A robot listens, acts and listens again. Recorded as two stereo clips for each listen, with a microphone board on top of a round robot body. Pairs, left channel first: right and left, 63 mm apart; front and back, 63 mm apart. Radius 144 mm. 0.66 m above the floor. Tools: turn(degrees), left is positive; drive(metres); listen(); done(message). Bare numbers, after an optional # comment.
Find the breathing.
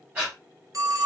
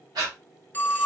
# The breathing: 155° left.
turn(155)
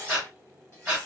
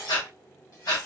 done("Found it: breathing, straight ahead.")